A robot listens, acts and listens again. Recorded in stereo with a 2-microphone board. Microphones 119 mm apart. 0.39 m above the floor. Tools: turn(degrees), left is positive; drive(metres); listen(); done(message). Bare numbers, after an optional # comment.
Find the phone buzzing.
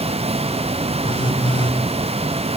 # The phone buzzing: about 45° left or 135° left.
turn(45)
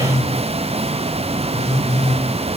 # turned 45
# So it is at 90° left.
turn(90)
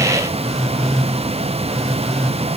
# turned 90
done("Found it: a phone buzzing, straight ahead, over 4 m away.")